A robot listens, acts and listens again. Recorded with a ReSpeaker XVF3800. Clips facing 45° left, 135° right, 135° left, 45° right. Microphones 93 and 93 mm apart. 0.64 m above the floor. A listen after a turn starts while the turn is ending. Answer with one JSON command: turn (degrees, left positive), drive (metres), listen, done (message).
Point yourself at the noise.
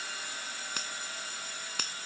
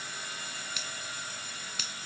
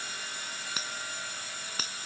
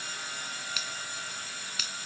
{"turn": 85}
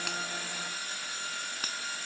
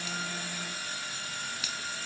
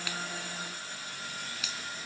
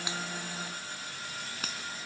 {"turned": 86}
{"done": "Found it: a finger snap, straight ahead."}